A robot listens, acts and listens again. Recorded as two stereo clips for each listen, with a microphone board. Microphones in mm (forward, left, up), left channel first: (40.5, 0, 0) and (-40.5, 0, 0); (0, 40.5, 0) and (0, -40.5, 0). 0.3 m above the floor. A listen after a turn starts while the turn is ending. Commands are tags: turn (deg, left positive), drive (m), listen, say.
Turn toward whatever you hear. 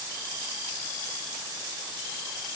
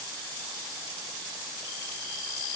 <listen/>
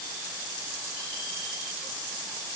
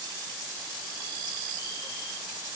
<listen/>
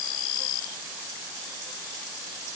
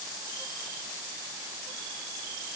<say>I can't make out anything.</say>